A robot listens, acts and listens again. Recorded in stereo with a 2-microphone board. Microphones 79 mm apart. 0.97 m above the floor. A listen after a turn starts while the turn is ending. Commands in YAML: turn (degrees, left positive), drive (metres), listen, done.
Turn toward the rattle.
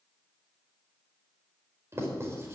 listen: true
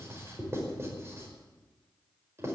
listen: true
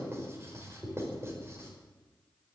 done: "I can't make out a rattle to turn to."